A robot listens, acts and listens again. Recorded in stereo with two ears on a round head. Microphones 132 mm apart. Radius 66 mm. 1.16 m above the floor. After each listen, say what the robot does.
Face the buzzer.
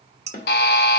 Turn 90° left.
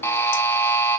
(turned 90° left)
Turn 15° left.
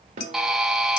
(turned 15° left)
Facing the buzzer.